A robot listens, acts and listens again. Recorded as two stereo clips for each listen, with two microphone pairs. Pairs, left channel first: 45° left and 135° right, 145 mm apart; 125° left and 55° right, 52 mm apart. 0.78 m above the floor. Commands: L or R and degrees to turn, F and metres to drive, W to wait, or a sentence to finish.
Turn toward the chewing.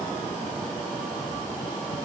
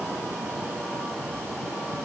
W
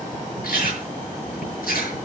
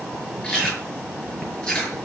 L55
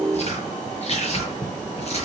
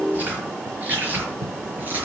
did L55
Facing the chewing.